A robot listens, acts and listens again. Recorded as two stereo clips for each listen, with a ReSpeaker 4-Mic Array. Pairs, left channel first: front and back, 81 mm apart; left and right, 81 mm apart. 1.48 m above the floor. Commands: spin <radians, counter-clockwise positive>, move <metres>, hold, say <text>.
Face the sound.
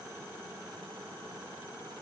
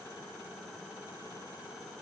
hold
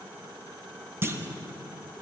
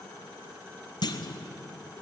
spin 2.09
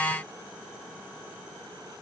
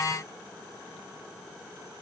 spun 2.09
say I heard a clunk from this way, but can't make it out now.